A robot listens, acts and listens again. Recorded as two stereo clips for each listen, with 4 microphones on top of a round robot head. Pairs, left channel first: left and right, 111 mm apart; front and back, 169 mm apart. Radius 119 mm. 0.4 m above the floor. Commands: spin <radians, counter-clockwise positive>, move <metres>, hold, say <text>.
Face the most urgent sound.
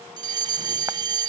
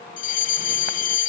spin -0.70
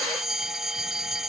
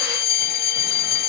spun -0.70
say Facing the fire alarm.